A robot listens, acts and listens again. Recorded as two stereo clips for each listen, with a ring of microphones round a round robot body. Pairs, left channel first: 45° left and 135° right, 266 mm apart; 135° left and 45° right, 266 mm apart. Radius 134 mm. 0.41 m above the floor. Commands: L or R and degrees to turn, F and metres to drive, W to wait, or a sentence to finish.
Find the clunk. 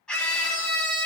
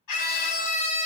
W
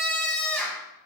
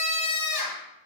W
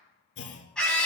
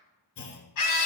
L95
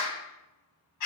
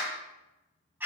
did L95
Facing where the clunk came from. I can't hear it now.